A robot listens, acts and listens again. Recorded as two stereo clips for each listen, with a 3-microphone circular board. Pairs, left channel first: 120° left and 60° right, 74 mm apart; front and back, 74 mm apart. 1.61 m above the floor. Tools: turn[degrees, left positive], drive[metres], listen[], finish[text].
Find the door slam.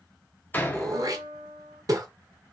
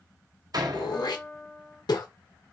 Thought: The door slam: straight behind.
Action: turn[180]
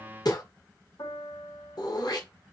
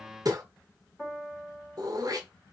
Action: finish[Facing where the door slam came from. I can't hear it now.]